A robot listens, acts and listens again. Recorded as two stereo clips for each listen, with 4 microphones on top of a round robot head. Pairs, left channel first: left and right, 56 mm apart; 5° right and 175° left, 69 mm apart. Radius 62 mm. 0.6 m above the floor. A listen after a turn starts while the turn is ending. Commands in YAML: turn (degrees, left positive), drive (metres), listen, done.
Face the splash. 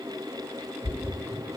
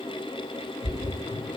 turn: 10
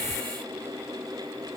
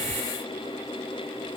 done: "Facing where the splash came from. I can't hear it now."